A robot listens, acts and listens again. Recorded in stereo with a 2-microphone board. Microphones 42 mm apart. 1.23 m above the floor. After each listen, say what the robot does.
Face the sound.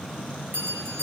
Turn 60° right.
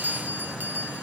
Turn 55° right.
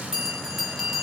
Turn 15° right.
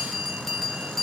Facing the bell.